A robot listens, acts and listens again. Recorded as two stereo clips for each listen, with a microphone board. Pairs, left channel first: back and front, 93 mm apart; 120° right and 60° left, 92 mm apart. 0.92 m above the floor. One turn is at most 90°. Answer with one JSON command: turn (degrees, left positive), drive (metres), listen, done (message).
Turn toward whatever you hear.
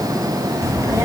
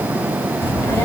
{"turn": -55}
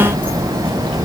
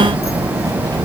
{"turn": 15}
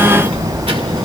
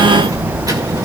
{"turn": 10}
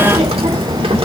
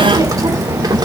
{"turn": 15}
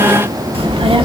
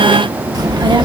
{"turn": 25}
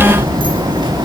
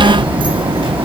{"turn": 35}
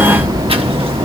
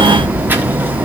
{"turn": -10}
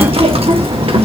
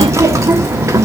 {"done": "Facing the child speaking, 1 to 2 m away."}